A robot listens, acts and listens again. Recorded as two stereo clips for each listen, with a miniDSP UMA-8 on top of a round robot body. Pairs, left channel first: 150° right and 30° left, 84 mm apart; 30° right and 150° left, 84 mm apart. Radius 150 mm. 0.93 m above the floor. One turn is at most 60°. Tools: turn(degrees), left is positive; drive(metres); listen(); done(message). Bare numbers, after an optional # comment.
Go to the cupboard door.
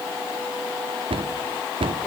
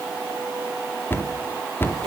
# The cupboard door: 35° left.
turn(35)
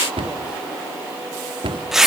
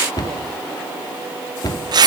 # The cupboard door is now 15° left.
turn(15)
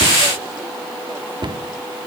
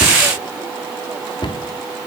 drive(1.0)
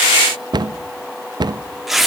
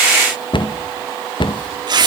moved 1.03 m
drive(1.0)
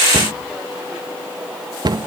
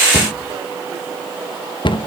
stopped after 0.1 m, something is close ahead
done("I am next to the cupboard door.")